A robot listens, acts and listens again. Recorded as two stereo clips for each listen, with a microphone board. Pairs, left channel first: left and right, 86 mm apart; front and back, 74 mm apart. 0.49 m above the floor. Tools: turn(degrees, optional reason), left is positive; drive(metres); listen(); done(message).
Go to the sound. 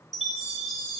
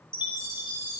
drive(metres=1.0)
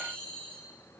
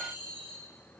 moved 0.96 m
turn(degrees=10, reason="The chime is now 10° left.")
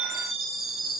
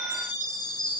drive(metres=1.0)
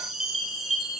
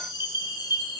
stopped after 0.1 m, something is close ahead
done("Arrived at the chime, straight ahead.")